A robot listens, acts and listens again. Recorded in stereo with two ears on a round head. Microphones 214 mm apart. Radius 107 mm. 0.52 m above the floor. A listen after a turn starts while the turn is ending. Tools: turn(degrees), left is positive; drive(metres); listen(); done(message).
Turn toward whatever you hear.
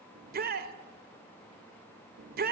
turn(degrees=-40)
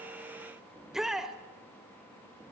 done("Facing the shout, 1 to 2 m away.")